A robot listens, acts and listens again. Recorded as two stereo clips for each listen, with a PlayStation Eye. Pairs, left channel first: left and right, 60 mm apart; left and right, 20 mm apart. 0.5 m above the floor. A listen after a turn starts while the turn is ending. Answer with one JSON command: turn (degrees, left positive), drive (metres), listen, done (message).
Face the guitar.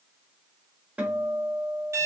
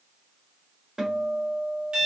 {"turn": -25}
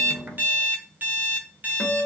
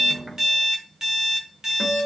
{"done": "Found it: a guitar, straight ahead, 1 to 2 m away."}